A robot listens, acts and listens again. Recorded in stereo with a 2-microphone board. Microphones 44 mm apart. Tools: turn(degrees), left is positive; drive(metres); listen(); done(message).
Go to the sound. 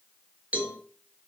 turn(degrees=-35)
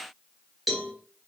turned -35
drive(metres=1.0)
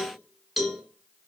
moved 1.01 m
drive(metres=1.0)
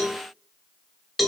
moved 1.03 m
drive(metres=1.0)
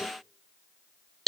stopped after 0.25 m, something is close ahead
done("Arrived at the cowbell, straight ahead.")